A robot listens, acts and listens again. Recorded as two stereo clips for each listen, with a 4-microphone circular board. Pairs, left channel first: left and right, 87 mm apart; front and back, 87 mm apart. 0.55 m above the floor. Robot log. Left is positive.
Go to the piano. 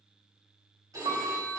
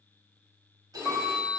note: The piano: 95° right.
cmd yaw -95
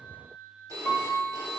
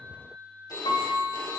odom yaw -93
cmd fwd 1.0
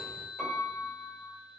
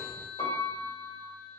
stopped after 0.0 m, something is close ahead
end: Blocked. The piano is further on, straight ahead.